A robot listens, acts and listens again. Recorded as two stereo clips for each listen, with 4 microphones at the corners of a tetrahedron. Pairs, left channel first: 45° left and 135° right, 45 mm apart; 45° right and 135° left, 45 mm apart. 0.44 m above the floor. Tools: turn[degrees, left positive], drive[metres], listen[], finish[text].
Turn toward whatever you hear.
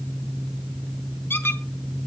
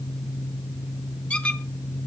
Thought: The squeak: 15° left.
Action: turn[15]
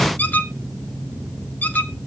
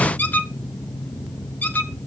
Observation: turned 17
Action: finish[Facing the squeak.]